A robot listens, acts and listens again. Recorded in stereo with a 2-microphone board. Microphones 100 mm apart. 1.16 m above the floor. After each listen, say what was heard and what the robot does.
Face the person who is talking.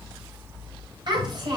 The child speaking: about 50° right or 130° right. Turn 50° right.
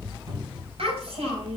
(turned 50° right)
So it is at 80° right. Turn 80° right.
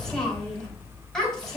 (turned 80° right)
Found it: a child speaking, straight ahead.